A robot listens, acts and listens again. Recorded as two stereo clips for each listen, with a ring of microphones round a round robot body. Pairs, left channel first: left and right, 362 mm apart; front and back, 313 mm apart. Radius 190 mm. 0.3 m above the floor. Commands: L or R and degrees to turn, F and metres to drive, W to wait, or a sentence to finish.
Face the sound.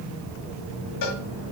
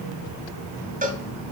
L115
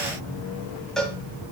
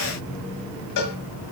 Found it: a cowbell, straight ahead.